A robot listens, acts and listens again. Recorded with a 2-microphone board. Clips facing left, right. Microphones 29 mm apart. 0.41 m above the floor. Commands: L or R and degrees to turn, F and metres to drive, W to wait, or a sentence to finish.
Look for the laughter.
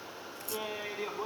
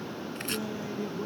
L45
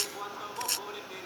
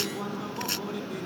L10
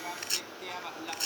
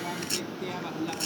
Found it: laughter, straight ahead.